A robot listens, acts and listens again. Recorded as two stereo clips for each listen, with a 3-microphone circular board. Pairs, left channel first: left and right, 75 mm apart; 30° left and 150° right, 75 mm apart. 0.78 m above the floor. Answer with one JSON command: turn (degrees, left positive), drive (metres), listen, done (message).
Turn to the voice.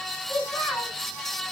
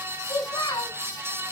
{"turn": 15}
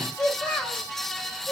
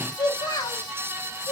{"turn": 15}
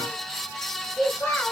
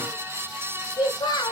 {"turn": 10}
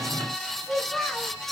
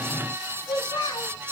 {"done": "Facing the child speaking."}